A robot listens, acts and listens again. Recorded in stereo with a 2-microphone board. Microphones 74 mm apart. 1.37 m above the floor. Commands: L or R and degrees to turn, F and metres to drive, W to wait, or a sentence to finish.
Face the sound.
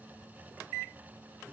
W
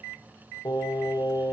L70
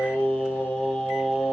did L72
Found it: singing, straight ahead.